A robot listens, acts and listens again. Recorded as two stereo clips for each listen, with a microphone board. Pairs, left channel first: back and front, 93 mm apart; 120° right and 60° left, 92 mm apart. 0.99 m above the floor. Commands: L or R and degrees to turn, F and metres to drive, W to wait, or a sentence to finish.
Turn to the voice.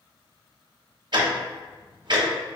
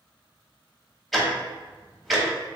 W
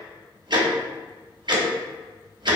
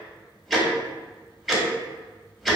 W
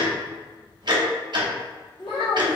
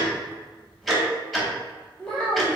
L160
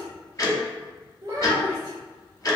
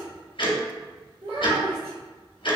L55
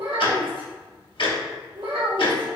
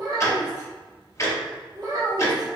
L15
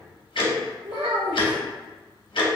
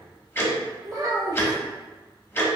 Facing the child speaking.